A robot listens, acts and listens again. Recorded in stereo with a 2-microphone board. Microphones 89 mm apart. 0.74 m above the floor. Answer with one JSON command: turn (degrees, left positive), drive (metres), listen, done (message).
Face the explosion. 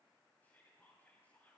{"listen": true}
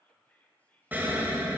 {"turn": -20}
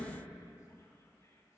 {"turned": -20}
{"listen": true}
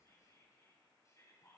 {"done": "I heard an explosion, but can't make it out now. It was about straight ahead or 140° right."}